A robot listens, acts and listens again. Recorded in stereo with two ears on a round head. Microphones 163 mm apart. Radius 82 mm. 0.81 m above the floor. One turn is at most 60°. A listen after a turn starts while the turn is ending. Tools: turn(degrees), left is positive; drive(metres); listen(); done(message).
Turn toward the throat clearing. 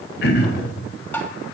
turn(degrees=60)
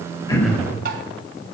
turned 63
done("Facing the throat clearing.")